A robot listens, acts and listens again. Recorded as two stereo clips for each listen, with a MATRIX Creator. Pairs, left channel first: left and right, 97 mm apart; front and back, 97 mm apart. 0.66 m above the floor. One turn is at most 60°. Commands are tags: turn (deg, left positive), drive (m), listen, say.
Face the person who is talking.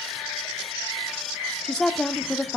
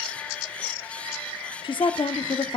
<turn deg="10"/>
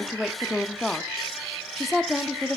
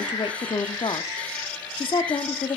<say>Found it: a woman speaking, straight ahead.</say>